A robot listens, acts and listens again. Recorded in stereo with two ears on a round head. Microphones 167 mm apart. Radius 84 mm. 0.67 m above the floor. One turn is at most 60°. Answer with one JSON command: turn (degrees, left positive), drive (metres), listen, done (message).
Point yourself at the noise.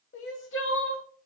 {"turn": 60}
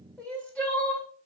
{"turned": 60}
{"done": "Facing the crying."}